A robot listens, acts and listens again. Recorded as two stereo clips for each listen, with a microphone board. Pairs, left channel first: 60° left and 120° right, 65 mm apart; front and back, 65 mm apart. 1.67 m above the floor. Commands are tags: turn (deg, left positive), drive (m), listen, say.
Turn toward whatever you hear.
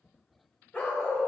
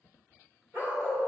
<turn deg="130"/>
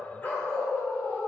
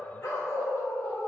<turn deg="25"/>
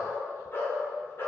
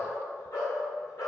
<turn deg="15"/>
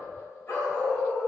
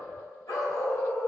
<say>Facing the dog barking, 2 to 4 m away.</say>